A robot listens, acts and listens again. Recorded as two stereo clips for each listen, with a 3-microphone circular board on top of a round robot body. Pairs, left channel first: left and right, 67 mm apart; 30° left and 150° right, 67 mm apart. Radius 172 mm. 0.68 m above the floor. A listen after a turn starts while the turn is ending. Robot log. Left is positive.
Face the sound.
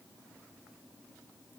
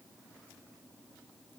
cmd idle
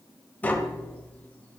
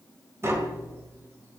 note: The tapping: 155° left.
cmd yaw +155
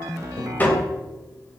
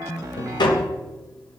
note: The tapping is now 25° left.
cmd yaw +25
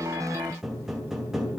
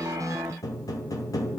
end: Found it: tapping, straight ahead, 2 to 4 m away.